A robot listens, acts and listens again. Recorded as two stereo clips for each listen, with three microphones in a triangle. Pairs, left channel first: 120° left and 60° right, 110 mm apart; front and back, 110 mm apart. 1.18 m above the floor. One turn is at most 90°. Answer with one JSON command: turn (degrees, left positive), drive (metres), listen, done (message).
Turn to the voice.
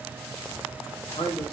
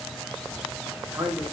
{"turn": 90}
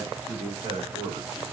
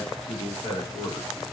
{"turn": -35}
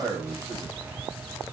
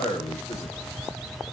{"done": "Found it: a man speaking, straight ahead, 2 to 4 m away."}